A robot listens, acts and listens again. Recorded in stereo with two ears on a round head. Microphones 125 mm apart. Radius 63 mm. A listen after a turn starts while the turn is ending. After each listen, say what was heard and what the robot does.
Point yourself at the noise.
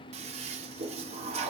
The toilet flushing: about 50° right or 130° right. Turn 50° right.
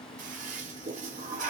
So it is at 75° right. Turn 75° right.
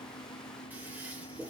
The toilet flushing is now 15° right. Turn 15° right.
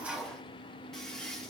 Facing the toilet flushing, under 1 m away.